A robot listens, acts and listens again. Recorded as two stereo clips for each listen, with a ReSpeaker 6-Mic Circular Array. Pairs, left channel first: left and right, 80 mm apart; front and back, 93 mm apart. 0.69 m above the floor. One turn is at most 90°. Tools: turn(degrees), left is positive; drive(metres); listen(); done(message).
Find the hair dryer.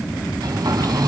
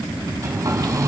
turn(degrees=-90)
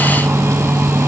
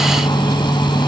turn(degrees=-35)
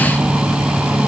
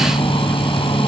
turn(degrees=-10)
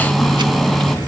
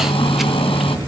done("Facing the hair dryer.")